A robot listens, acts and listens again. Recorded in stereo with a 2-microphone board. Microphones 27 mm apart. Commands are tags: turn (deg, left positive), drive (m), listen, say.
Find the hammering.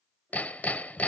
<turn deg="70"/>
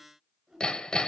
<turn deg="30"/>
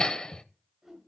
<turn deg="25"/>
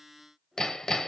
<turn deg="20"/>
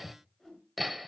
<say>Found it: hammering, straight ahead.</say>